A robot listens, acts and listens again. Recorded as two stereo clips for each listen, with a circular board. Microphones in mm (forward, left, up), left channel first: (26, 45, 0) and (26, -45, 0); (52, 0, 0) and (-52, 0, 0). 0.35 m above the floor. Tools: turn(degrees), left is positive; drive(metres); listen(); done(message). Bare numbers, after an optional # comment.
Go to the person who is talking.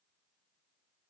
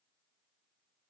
listen()
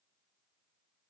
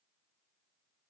listen()
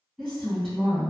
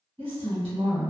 # The woman speaking: 175° left.
turn(175)
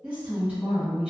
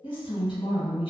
# The woman speaking is now 15° right.
turn(-15)
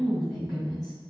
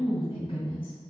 drive(1.0)
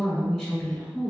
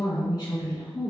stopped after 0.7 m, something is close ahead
done("I am next to the woman speaking.")